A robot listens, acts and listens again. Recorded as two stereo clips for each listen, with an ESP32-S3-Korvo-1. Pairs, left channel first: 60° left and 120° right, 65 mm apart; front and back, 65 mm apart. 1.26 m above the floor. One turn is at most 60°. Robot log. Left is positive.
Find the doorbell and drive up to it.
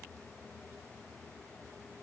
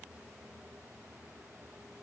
cmd idle
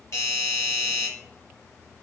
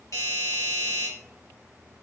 note: The doorbell: 25° left.
cmd yaw +25
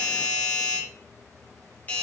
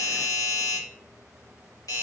cmd fwd 1.0
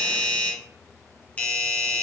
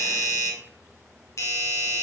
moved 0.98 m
cmd fwd 1.0
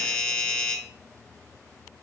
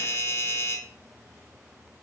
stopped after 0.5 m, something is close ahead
end: Arrived at the doorbell, straight ahead.